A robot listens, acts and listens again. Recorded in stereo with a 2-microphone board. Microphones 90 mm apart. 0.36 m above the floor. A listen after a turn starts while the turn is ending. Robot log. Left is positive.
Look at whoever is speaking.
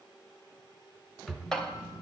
note: The child speaking: about 50° left or 130° left.
cmd yaw +50
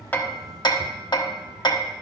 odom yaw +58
note: So it is at 10° left.
cmd yaw +10
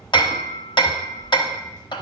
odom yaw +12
note: The child speaking is now 25° left.
cmd yaw +25
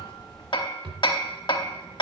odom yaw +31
end: Facing the child speaking.